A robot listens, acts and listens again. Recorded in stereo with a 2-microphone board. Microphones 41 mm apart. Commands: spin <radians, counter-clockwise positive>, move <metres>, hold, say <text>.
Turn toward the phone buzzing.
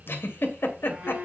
spin -0.79
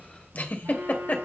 spin -1.57
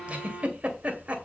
say Found it: a phone buzzing, straight ahead.